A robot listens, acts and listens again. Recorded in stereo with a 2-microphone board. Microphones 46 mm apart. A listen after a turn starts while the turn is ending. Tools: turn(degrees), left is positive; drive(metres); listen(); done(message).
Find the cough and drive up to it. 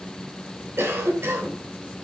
turn(degrees=-65)
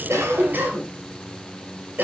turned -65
turn(degrees=-45)
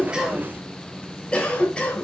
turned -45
turn(degrees=25)
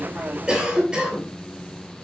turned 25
turn(degrees=-20)
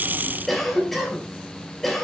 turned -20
drive(metres=1.0)
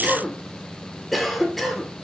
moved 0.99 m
drive(metres=1.0)
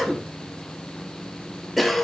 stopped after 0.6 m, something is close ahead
done("I am next to the cough.")